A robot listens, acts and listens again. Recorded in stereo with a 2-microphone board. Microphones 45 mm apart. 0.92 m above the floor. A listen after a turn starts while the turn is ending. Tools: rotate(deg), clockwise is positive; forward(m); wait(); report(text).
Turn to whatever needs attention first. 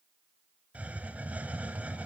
wait()
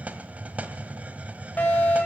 rotate(-35)
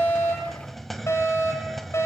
rotate(-110)
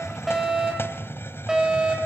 rotate(15)
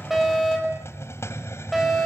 report("Facing the fire alarm, over 4 m away.")